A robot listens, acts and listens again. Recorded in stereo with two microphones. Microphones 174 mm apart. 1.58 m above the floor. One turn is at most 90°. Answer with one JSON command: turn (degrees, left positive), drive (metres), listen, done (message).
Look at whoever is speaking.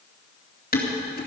{"listen": true}
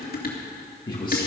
{"turn": 25}
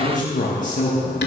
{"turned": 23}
{"turn": 90}
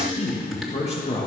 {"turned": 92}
{"turn": 40}
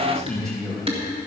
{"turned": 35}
{"done": "Found it: a man speaking, straight ahead."}